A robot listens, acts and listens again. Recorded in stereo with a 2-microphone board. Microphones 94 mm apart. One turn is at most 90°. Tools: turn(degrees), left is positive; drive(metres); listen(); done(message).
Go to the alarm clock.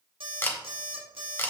turn(degrees=-70)
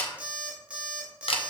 turn(degrees=-15)
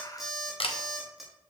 drive(metres=1.0)
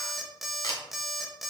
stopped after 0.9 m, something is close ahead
done("I am next to the alarm clock.")